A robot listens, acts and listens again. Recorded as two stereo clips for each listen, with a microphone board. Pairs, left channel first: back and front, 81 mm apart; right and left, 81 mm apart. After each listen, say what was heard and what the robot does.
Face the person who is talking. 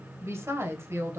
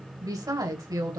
The woman speaking: 55° left. Turn 55° left.
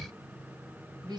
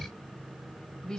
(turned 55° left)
The woman speaking is now 10° right. Turn 10° right.
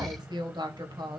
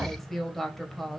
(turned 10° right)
Facing the woman speaking.